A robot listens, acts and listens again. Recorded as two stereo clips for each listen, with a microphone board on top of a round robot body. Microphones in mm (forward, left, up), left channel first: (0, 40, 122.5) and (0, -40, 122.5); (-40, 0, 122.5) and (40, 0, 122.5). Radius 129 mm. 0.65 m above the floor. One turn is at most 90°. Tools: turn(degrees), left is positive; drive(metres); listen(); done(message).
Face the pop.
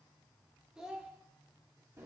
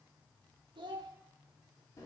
listen()
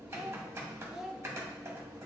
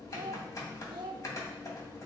listen()
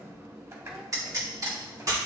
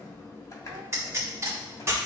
turn(degrees=-50)
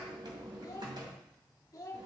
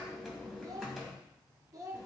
done("Facing where the pop came from. I can't hear it now.")